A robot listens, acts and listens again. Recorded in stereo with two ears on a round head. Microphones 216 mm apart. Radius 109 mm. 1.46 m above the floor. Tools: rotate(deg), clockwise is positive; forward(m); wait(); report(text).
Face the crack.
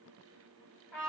wait()
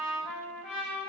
wait()
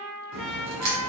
rotate(90)
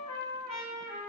report("Facing where the crack came from. I can't hear it now.")